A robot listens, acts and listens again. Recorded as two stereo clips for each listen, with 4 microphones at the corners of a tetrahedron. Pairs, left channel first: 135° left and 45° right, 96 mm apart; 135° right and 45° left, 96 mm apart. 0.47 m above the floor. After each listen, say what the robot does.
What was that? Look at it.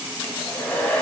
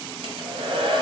Turn 60° left.
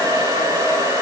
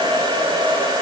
Facing the hair dryer.